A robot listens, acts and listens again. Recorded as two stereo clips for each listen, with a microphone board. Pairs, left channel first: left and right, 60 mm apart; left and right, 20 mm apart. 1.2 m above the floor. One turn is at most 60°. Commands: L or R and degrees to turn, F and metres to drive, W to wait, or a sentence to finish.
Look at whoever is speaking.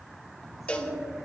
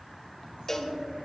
R60
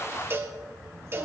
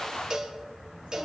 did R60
W
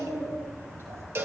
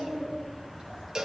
R45
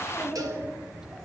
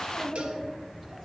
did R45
R10
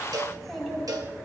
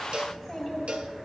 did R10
Facing the child speaking.